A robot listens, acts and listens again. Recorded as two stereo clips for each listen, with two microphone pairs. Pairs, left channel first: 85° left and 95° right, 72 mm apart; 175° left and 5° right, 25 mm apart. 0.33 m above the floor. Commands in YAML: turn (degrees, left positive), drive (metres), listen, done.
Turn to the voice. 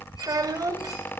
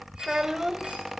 turn: -75
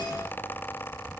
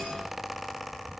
listen: true
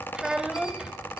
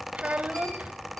turn: -15
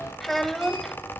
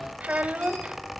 done: "Facing the child speaking."